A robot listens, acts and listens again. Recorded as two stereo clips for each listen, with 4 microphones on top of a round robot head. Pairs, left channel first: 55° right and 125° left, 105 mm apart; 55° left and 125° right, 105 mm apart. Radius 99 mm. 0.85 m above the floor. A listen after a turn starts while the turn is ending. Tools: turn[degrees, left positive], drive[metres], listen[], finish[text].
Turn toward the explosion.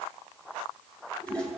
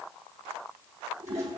Action: listen[]
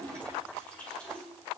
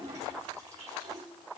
Action: listen[]
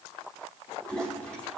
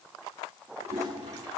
Action: finish[I can't make out an explosion to turn to.]